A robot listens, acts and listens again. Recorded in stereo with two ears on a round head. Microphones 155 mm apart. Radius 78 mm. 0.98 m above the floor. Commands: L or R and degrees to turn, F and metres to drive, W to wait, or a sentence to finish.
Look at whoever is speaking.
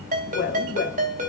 L90
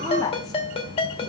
L20
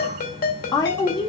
L25
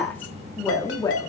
L20
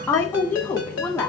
L10
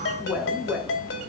Facing the woman speaking.